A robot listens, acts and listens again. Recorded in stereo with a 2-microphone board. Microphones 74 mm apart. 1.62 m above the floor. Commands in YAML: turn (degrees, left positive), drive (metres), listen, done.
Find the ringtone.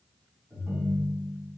turn: -30
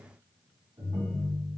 turn: -115
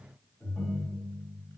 done: "Facing the ringtone, 1 to 2 m away."